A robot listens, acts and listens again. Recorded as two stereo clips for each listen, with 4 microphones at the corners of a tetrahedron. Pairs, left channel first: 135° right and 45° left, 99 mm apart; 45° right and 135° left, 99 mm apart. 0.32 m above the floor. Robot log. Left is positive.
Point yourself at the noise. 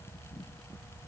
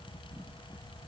cmd idle
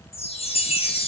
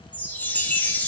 note: The chime: 120° right.
cmd yaw -120
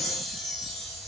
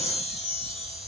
note: The chime is now 50° right.
cmd yaw -50
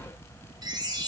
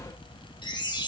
end: Found it: a chime, straight ahead, 2 to 4 m away.